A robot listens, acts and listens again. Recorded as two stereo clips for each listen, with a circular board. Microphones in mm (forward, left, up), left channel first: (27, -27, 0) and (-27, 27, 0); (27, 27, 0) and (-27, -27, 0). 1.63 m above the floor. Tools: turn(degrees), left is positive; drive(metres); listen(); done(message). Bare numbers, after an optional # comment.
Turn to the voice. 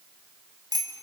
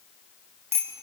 listen()
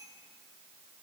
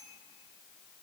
listen()
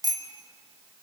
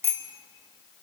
done("I can't make out anyone speaking, only a bicycle bell.")